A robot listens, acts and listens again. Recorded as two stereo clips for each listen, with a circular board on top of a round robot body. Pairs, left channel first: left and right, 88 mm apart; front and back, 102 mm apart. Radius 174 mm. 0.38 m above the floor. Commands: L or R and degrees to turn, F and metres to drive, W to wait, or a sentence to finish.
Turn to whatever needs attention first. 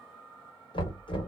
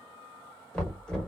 W
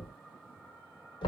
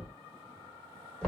W
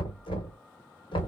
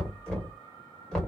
I can't make out anything urgent, only knocking.